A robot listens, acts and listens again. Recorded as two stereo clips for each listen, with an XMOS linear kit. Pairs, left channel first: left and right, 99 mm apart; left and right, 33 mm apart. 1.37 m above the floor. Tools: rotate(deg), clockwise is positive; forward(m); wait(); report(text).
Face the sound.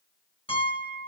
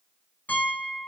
rotate(-65)
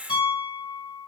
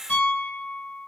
rotate(-55)
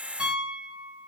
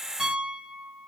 rotate(10)
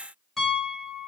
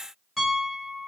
report("Facing the piano.")